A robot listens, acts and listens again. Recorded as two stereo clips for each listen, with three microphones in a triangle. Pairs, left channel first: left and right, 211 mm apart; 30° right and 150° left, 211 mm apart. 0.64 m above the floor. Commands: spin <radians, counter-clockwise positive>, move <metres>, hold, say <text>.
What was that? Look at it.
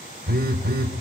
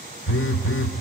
spin -0.79
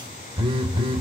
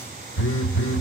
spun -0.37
spin -0.44
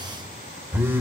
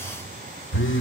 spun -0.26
spin -0.17
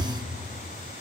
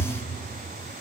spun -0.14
say Facing the phone buzzing.